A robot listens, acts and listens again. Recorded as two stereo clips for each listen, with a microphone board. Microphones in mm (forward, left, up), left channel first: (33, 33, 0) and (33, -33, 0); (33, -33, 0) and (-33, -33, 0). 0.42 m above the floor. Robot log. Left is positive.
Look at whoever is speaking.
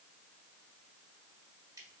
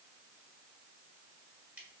cmd idle
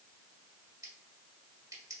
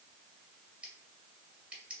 cmd idle
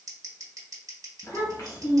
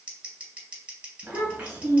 note: The child speaking: 120° left.
cmd yaw +120
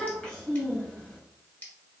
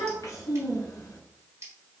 note: The child speaking is now 15° left.
cmd yaw +15
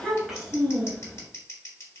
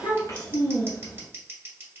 end: Facing the child speaking.